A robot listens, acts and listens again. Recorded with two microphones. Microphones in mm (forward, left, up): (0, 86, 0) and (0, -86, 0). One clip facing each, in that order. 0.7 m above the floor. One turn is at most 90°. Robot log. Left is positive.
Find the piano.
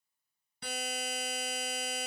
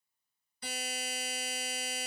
cmd idle
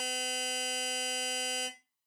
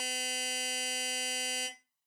cmd idle
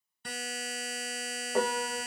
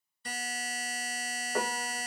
cmd yaw +30
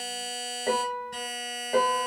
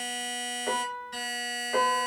note: So it is at 140° left.
cmd yaw +90
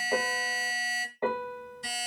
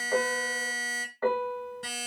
note: The piano is now 20° left.
cmd yaw +20
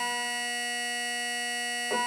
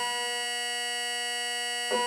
end: Found it: a piano, straight ahead, under 1 m away.